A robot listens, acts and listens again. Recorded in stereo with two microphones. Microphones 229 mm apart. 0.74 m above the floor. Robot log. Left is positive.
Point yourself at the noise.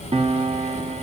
note: The piano: about 25° right or 155° right.
cmd yaw -25
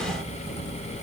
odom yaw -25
cmd idle
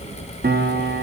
note: So it is at 130° right.
cmd yaw -130
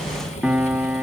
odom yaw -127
end: Facing the piano, under 1 m away.